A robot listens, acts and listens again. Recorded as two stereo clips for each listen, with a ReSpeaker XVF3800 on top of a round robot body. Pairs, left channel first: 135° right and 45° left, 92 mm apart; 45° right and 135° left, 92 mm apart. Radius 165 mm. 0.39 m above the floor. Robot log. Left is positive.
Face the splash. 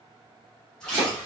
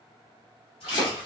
note: The splash: 55° right.
cmd yaw -55
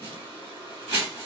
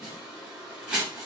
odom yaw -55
end: Facing where the splash came from. I can't hear it now.